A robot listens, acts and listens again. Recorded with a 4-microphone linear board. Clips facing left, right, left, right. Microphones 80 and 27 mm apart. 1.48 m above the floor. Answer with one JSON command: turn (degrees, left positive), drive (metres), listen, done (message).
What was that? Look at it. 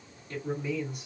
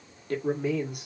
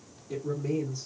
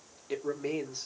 {"turn": -70}
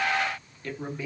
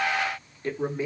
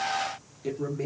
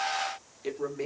{"turn": -30}
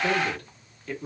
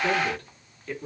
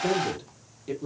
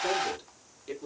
{"done": "Found it: a man speaking, straight ahead."}